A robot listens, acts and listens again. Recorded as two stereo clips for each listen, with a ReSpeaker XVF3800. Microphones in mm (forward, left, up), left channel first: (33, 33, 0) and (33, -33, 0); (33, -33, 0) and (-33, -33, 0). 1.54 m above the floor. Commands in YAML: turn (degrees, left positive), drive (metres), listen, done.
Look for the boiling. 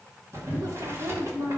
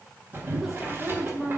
turn: -130
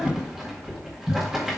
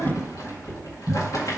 turn: -10
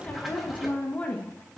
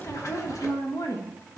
listen: true
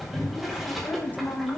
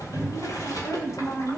turn: -10
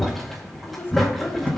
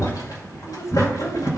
done: "Found it: boiling, straight ahead, 1 to 2 m away."